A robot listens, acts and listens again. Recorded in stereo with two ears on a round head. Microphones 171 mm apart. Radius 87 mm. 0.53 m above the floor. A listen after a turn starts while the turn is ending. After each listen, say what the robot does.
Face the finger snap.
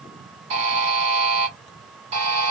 Keep listening.
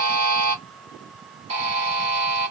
Keep listening.
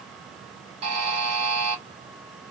I can't make out a finger snap, only a buzzer.